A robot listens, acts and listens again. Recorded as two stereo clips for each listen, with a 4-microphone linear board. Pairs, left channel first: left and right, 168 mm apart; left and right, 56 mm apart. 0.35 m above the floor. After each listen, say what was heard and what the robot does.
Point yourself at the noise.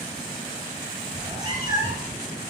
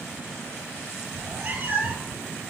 The cat meowing: about 30° right or 150° right. Turn 30° right.
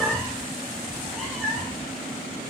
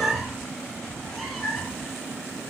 Found it: a cat meowing, straight ahead.